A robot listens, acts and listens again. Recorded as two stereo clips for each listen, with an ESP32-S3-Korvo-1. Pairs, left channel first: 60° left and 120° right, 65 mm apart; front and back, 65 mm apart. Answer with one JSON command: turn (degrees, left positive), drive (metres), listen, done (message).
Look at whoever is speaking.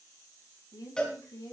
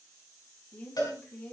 {"turn": 65}
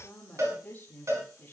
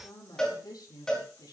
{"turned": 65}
{"done": "Found it: a woman speaking, straight ahead."}